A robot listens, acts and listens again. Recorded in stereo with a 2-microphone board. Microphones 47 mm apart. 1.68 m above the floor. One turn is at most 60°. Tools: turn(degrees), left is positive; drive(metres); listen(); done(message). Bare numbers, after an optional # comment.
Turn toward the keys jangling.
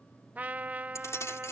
# The keys jangling: about 70° left or 110° left.
turn(60)
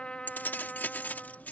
# So it is at 35° left.
turn(35)
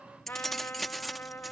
done("Found it: keys jangling, straight ahead.")